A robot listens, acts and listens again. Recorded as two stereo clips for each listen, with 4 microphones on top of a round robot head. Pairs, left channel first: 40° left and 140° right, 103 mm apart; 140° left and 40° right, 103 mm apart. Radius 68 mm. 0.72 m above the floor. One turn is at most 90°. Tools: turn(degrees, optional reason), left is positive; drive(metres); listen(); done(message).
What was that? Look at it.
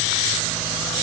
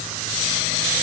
listen()
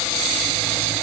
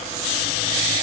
listen()
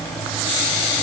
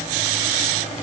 done("I can't make out anything.")